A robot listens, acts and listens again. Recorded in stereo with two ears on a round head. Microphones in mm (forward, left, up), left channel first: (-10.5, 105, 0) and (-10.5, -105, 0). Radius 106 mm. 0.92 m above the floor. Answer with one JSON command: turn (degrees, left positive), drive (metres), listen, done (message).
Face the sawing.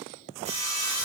{"turn": -30}
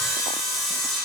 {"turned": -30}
{"done": "Found it: sawing, straight ahead, 2 to 4 m away."}